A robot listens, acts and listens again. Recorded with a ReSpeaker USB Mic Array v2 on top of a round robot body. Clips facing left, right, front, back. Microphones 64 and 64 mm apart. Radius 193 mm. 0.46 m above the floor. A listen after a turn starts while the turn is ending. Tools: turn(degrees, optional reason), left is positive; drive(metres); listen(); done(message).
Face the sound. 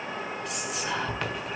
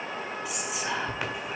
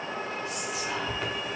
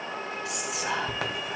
turn(degrees=-170, reason="The whispering: 170° right.")
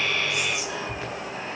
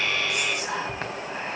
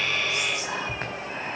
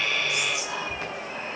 turn(degrees=-50, reason="The whispering is now 50° right.")
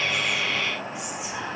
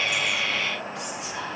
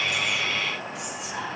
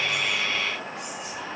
turn(degrees=15, reason="The whispering is now 15° left.")
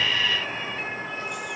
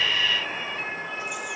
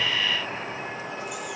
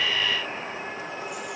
listen()
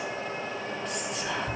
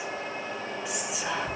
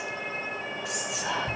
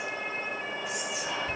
done("Facing the whispering.")